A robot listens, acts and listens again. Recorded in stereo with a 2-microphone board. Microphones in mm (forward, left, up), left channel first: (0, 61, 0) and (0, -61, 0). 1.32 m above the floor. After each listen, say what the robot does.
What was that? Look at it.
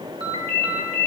Turn 50° right.
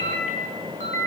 Turn 75° right.
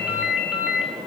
Found it: a ringtone, straight ahead, 2 to 4 m away.